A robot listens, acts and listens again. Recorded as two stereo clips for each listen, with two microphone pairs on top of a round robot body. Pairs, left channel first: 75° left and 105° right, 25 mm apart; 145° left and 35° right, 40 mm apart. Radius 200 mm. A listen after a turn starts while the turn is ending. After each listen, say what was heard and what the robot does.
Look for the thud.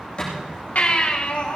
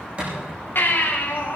The thud: 25° left. Turn 25° left.
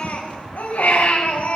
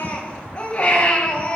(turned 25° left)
Facing where the thud came from. I can't hear it now.